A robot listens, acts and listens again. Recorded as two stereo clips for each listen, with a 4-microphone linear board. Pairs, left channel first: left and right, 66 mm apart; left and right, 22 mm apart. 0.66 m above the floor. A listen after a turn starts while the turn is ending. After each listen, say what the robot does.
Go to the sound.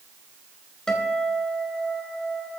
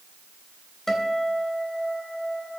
Turn 30° left.
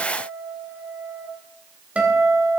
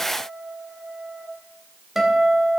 Turn 20° right.
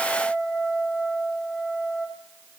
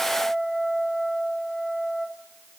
Drive 1.0 m forward.
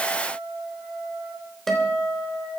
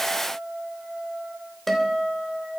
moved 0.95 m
Drive 1.0 m forward.
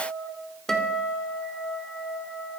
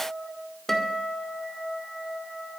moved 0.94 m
Turn 10° left.
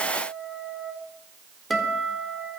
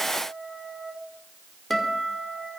Drive 1.0 m forward.
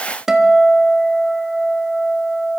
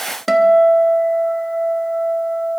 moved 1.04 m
Turn 10° right.
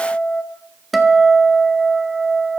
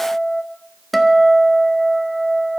Drive 1.0 m forward.
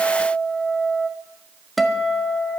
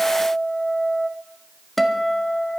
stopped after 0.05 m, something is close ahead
I am next to the guitar.